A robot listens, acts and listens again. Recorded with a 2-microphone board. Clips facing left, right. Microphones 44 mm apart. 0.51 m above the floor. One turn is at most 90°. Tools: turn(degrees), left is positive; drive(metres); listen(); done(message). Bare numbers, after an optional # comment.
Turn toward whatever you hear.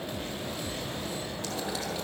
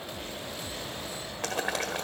# The boiling: about 65° right or 115° right.
turn(-65)
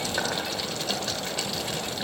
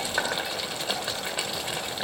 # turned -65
# So it is at 20° right.
turn(-20)
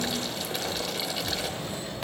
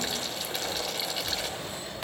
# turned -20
done("Found it: boiling, straight ahead.")